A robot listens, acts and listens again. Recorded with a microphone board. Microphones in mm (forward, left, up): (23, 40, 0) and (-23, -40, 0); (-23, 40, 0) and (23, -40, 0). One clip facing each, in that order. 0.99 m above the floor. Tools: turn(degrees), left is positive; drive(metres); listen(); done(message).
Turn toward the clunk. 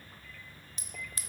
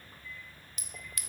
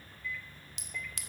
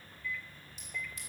listen()
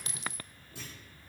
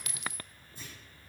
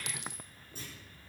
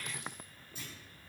turn(degrees=70)
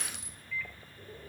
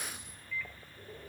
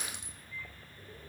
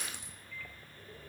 done("Facing where the clunk came from. I can't hear it now.")